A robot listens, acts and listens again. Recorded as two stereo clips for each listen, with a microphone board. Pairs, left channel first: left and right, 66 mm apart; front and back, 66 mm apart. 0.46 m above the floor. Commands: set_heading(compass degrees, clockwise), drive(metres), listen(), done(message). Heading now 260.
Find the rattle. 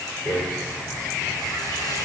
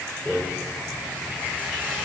set_heading(190)
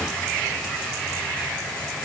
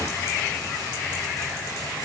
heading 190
set_heading(175)
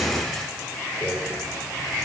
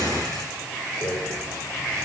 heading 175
done("Found it: a rattle, straight ahead.")